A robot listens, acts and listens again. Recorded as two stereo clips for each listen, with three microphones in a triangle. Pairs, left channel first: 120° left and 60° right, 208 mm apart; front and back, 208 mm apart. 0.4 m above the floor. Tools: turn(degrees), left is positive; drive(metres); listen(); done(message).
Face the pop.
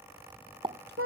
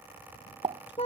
turn(degrees=-120)
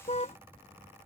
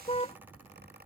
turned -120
done("Facing where the pop came from. I can't hear it now.")